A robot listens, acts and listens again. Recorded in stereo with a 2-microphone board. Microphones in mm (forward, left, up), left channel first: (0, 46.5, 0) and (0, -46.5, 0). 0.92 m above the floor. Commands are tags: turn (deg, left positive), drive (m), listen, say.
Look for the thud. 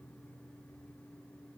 <listen/>
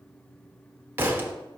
<turn deg="-25"/>
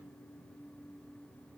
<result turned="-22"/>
<listen/>
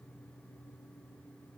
<say>I heard a thud, but can't make it out now. It was about straight ahead or 135° right.</say>